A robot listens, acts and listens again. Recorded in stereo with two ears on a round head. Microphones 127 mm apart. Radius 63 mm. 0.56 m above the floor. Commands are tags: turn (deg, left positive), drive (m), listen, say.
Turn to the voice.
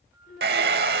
<turn deg="60"/>
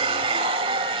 <listen/>
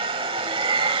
<listen/>
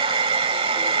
<say>I heard a child speaking, but can't make it out now. It was about straight ahead or 60° left.</say>